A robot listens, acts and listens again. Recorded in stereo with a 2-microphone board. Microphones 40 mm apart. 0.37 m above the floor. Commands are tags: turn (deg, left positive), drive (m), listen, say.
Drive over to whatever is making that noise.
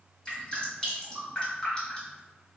<turn deg="20"/>
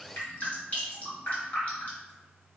<turn deg="135"/>
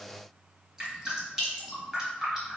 <turn deg="-10"/>
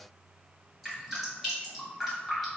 <drive m="1.0"/>
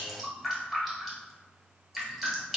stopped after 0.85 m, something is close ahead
<say>I am next to the dripping.</say>